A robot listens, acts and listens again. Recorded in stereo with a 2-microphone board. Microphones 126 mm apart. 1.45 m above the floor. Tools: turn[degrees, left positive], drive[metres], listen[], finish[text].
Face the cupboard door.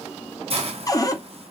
Thought: The cupboard door: about 30° left or 150° left.
Action: turn[30]
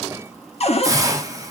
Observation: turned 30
Thought: So it is at 120° left.
Action: turn[120]
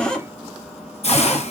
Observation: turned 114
Action: finish[Found it: a cupboard door, straight ahead, under 1 m away.]